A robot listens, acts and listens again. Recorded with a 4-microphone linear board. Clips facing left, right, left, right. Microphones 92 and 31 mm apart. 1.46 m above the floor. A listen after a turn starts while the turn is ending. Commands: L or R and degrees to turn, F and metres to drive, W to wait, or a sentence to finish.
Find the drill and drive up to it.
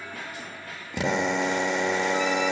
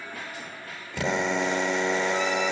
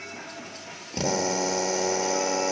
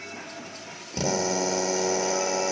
L20
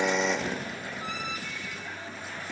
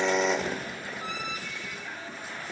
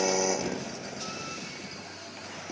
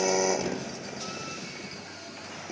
F1.0
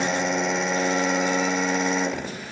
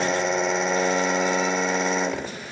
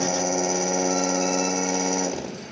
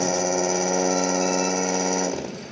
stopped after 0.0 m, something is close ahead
Blocked. The drill is further on, straight ahead.